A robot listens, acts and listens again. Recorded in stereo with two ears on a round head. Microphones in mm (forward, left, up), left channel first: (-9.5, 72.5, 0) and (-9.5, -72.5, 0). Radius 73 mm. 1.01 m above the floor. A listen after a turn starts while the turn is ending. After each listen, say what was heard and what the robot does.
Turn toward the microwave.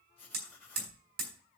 Keep listening.
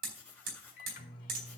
The microwave: about 55° left or 125° left. Turn 55° left.
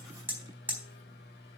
So it is at 70° left. Turn 70° left.
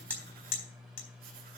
Facing the microwave, 2 to 4 m away.